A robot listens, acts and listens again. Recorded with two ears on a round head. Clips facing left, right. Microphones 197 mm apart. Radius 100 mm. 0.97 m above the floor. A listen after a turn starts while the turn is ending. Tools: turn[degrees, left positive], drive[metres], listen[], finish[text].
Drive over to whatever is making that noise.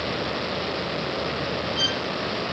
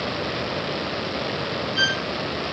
Thought: The violin: about 20° right or 160° right.
Action: turn[-20]
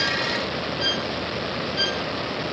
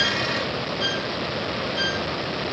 Action: drive[1.0]
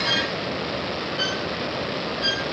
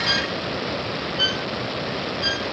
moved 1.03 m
Action: drive[1.0]
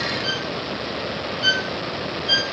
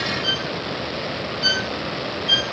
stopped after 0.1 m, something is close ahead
Action: finish[Arrived at the violin, straight ahead.]